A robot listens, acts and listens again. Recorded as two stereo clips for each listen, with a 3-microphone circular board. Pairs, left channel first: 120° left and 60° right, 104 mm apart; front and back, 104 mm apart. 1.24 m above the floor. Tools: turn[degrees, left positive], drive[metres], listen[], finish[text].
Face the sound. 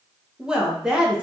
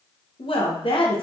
Thought: The woman speaking: 25° left.
Action: turn[25]
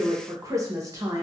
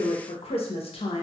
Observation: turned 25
Action: finish[Facing the woman speaking, under 1 m away.]